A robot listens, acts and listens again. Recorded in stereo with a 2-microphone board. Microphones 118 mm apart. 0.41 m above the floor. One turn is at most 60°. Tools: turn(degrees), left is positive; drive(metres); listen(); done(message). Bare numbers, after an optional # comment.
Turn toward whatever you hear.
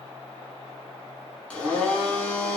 turn(30)
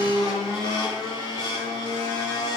# So it is at 140° left.
turn(60)
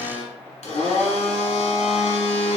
# The blender is now 100° left.
turn(60)
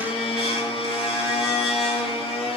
# The blender is now 60° left.
turn(60)
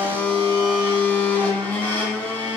# The blender is now 15° left.
turn(15)
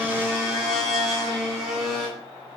done("Facing the blender.")